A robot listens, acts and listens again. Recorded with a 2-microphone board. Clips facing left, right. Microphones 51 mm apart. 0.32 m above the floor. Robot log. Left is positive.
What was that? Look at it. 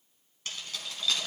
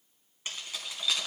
cmd yaw -30
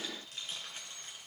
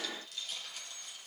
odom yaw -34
note: So it is at 35° left.
cmd yaw +35
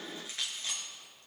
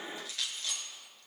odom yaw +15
note: The keys jangling is now 25° left.
cmd yaw +25
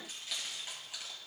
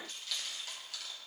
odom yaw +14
note: The keys jangling is now 20° left.
cmd yaw +20
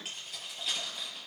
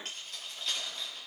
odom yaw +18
end: Found it: keys jangling, straight ahead.